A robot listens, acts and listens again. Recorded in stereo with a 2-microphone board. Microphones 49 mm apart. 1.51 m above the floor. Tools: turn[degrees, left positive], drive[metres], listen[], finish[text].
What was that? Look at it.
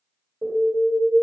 Thought: The alarm: about 35° right or 145° right.
Action: turn[-35]
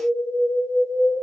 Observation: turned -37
Action: finish[Found it: an alarm, straight ahead, 1 to 2 m away.]